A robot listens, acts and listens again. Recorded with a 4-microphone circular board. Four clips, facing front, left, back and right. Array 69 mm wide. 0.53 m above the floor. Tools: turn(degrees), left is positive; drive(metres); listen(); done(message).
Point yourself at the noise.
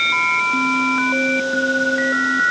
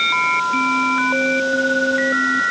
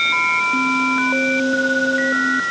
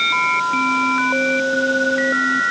listen()
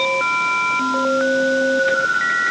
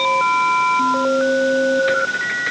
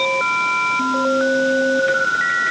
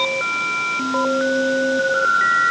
listen()
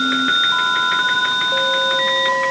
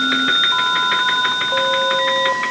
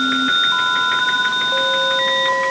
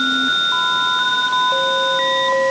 done("I can't make out anything.")